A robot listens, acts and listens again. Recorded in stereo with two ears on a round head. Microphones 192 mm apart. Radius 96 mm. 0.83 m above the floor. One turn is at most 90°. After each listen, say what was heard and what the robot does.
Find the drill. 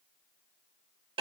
Keep listening.
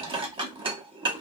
Keep listening.
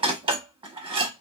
I can't make out a drill, only dishes clattering.